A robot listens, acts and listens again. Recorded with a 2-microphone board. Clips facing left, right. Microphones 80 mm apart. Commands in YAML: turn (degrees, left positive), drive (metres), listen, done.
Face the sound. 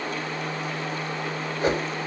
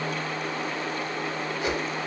turn: 40
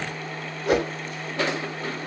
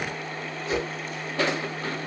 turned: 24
turn: 110
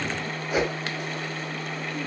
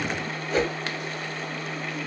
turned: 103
turn: 10
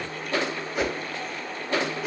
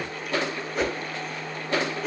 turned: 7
done: "Facing the whoosh, under 1 m away."